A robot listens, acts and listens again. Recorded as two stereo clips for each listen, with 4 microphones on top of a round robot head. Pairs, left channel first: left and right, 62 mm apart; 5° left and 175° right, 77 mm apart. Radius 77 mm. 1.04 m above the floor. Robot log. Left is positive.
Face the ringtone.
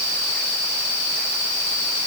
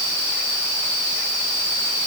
cmd idle
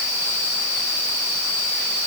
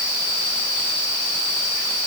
cmd idle
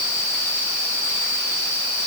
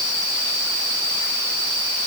end: I can't make out a ringtone.